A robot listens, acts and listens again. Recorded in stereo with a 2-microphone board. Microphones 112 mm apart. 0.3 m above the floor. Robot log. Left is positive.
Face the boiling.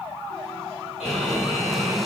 cmd yaw +30
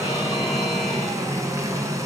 note: So it is at 30° right.
cmd yaw -30
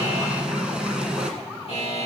note: The boiling is now 10° right.
cmd yaw -10
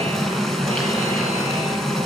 end: Found it: boiling, straight ahead, 1 to 2 m away.